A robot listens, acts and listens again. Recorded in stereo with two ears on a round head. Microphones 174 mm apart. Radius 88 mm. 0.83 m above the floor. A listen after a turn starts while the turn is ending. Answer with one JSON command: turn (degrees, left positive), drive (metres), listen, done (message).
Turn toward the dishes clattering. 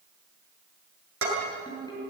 {"turn": -90}
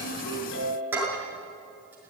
{"turn": -10}
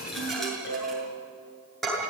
{"done": "Found it: dishes clattering, straight ahead, over 4 m away."}